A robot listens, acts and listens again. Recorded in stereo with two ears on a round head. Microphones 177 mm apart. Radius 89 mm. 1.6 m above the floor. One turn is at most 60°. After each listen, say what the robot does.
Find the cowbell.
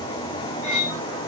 Keep listening.
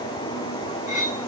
Keep listening.
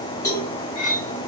Turn 15° left.
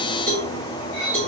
Facing the cowbell, 1 to 2 m away.